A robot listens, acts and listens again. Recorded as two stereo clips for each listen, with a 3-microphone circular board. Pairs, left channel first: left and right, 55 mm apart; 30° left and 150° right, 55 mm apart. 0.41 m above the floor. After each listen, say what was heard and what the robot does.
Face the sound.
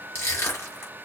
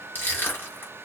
The crushing: 75° left. Turn 75° left.
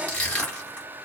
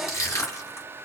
The crushing is now 25° left. Turn 25° left.
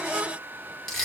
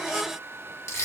The crushing is now 10° left. Turn 10° left.
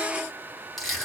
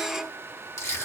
Found it: crushing, straight ahead.